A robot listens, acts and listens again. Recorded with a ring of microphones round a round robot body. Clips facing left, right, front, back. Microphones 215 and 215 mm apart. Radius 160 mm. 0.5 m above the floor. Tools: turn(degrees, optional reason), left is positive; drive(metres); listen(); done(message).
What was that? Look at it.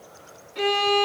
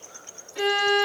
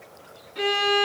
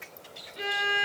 turn(degrees=-10, reason="The violin: 10° right.")
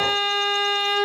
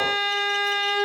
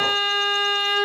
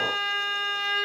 done("Facing the violin.")